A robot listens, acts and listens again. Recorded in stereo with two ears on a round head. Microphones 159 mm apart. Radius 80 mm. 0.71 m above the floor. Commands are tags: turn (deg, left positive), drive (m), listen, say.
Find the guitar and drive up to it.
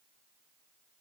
<listen/>
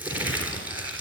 <listen/>
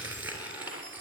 <say>I can't make out a guitar, only crumpling.</say>